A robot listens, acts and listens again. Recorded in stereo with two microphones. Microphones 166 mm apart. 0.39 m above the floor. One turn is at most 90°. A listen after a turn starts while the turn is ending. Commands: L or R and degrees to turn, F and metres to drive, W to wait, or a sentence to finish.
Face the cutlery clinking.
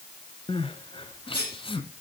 L70
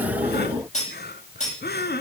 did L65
L45
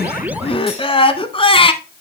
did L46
W
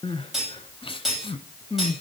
Facing the cutlery clinking, over 4 m away.